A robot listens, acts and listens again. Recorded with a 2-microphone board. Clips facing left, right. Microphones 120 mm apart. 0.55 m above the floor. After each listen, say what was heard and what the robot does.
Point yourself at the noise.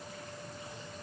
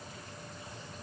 Keep listening.
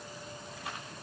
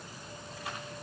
Keep listening.
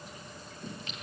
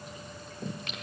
The singing: about 70° right or 110° right. Turn 70° right.
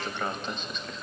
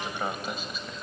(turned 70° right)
Facing the singing, 2 to 4 m away.